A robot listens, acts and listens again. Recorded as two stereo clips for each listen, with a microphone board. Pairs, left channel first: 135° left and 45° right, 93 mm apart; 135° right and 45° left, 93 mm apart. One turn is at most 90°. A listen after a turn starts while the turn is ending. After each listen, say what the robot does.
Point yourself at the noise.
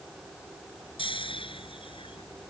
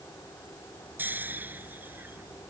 Turn 90° left.
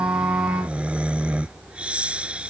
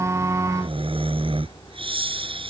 Turn 35° left.
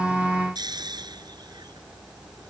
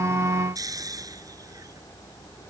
Facing the snoring.